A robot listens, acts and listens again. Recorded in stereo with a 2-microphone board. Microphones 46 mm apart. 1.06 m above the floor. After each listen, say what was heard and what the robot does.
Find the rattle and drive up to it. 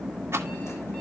The rattle: about 70° right or 110° right. Turn 70° right.
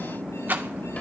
So it is at 45° right. Turn 45° right.
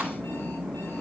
Keep listening.
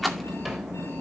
Drive 1.0 m forward.
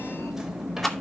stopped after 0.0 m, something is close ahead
Something is in my way. I am facing the rattle but have not reached it.